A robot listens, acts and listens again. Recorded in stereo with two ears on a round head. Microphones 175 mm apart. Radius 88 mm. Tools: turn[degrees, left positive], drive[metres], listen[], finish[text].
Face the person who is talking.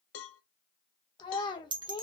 Thought: The child speaking: about 25° left or 155° left.
Action: turn[25]
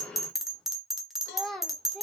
Action: finish[Facing the child speaking.]